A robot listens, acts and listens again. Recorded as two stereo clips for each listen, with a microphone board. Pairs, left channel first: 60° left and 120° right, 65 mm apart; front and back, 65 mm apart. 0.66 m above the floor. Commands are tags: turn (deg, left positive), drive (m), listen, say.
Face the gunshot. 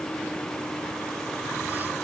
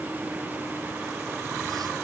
<listen/>
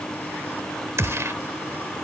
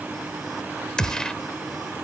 <turn deg="-80"/>
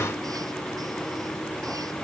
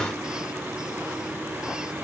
<say>Facing where the gunshot came from. I can't hear it now.</say>